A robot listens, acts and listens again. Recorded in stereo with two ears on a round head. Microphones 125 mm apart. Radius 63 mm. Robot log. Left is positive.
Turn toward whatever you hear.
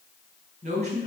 note: The man speaking: about 55° right or 125° right.
cmd yaw -55
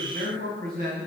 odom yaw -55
note: So it is at 75° right.
cmd yaw -75
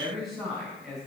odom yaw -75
end: Found it: a man speaking, straight ahead.